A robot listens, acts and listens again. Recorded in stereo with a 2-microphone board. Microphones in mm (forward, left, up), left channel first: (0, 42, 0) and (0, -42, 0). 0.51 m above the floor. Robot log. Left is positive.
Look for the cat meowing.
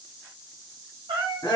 cmd yaw -90
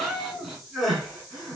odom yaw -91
end: Found it: a cat meowing, straight ahead.